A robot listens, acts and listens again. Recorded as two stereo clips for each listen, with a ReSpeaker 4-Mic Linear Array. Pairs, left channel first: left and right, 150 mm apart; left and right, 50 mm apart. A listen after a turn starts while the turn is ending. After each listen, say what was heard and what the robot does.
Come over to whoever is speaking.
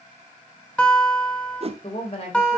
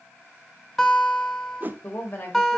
The woman speaking: about 45° left or 135° left. Turn 45° left.
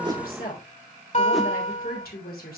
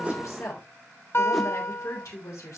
So it is at 90° left. Turn 90° left.
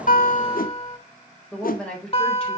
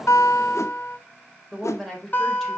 Drive 1.0 m forward.
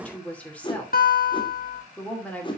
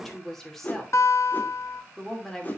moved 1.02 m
The woman speaking is now 10° left. Turn 10° left.
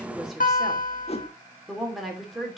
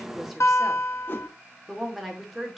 Drive 1.0 m forward.
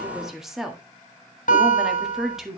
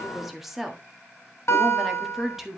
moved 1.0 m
Drive 1.0 m forward.
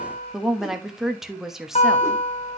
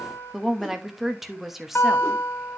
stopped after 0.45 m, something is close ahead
I am next to the woman speaking.